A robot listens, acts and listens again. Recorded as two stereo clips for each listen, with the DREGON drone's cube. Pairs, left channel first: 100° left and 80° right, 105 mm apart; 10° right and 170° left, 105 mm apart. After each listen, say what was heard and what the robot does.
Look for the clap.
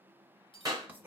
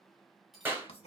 The clap: 120° right. Turn 120° right.
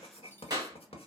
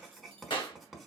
The clap is now 35° right. Turn 35° right.
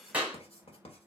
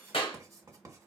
Facing the clap, 1 to 2 m away.